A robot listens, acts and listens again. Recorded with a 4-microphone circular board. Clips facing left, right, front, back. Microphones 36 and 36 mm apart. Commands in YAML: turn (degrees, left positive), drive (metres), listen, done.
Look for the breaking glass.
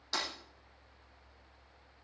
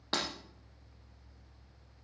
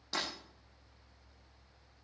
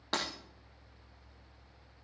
turn: -140
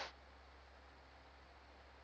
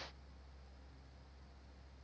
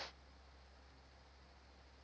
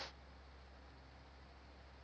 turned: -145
done: "Facing where the breaking glass came from. I can't hear it now."